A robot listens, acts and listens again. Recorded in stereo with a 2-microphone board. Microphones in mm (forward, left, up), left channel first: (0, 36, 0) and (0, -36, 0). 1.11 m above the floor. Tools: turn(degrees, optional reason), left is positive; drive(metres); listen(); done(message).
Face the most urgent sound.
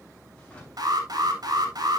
turn(degrees=-65, reason="The alarm: about 65° right or 115° right.")
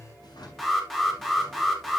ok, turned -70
done("Found it: an alarm, straight ahead.")